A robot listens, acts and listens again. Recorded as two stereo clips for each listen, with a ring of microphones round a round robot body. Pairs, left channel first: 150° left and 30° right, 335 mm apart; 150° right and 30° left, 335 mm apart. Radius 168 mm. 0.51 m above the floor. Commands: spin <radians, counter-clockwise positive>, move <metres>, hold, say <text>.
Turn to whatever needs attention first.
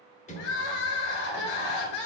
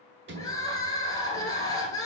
spin 2.27
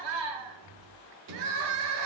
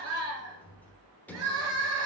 spin -0.35
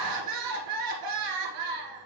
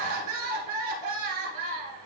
say Found it: crying, straight ahead, 1 to 2 m away.